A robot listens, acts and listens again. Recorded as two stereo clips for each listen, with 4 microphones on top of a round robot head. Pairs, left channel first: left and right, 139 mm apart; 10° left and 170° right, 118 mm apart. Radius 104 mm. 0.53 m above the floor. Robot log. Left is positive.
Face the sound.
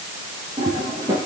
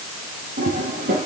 note: The toilet flushing: 160° right.
cmd yaw -160
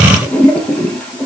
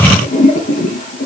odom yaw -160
end: Found it: a toilet flushing, straight ahead.